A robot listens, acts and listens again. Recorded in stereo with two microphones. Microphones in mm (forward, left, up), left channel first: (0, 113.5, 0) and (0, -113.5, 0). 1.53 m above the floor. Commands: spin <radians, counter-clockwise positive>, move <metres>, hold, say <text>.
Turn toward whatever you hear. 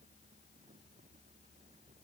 hold
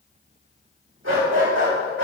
spin -1.22
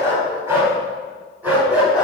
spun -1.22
say Facing the dog barking, 2 to 4 m away.